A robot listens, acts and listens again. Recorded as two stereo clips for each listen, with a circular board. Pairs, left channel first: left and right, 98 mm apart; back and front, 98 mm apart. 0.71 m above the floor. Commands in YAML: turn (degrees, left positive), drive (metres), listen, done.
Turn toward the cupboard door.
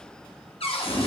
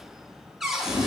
turn: 85
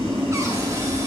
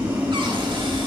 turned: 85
listen: true
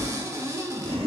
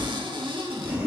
turn: -30
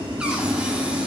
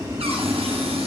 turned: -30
listen: true
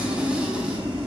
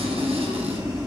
listen: true
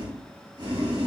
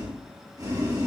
done: "Facing where the cupboard door came from. I can't hear it now."